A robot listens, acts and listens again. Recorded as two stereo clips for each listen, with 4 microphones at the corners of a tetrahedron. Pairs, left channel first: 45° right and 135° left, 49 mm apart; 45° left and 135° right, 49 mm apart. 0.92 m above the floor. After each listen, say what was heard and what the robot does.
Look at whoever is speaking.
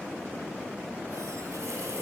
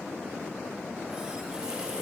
Keep listening.
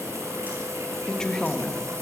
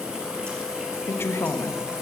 The woman speaking: 30° left. Turn 30° left.
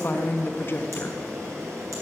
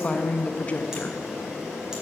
The woman speaking is now 10° right. Turn 10° right.
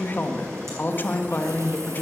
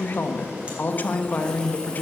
Facing the woman speaking, 1 to 2 m away.